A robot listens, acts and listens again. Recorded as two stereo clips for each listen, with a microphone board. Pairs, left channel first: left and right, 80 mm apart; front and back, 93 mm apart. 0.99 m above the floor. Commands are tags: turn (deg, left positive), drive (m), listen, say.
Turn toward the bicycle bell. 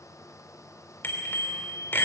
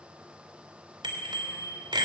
<turn deg="150"/>
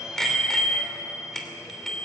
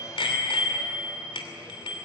<say>Facing the bicycle bell, 2 to 4 m away.</say>